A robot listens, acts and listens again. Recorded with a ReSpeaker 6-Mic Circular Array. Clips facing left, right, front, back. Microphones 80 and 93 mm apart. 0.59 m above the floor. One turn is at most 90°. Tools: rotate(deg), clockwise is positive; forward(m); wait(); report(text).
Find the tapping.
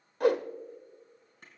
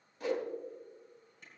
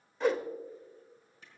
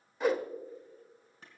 wait()
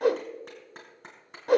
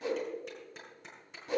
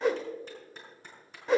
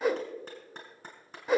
wait()
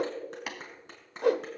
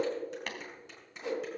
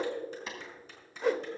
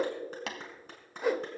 rotate(-90)
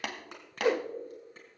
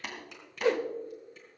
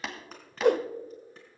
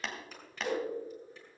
rotate(-85)
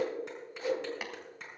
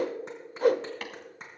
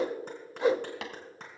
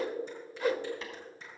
wait()
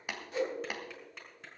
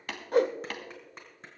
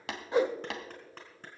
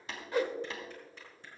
rotate(-10)
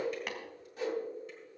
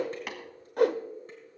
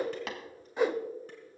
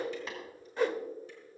report("Found it: tapping, straight ahead.")